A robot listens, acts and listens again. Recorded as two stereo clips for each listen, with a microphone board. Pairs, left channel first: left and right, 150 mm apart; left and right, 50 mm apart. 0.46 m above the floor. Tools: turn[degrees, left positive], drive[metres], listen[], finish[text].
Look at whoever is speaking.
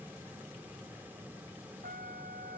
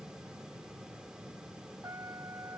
Action: listen[]
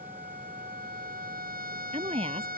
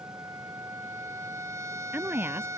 Thought: The woman speaking: about 40° right or 140° right.
Action: turn[-40]
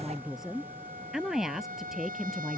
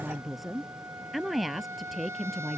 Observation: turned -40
Action: finish[Found it: a woman speaking, straight ahead.]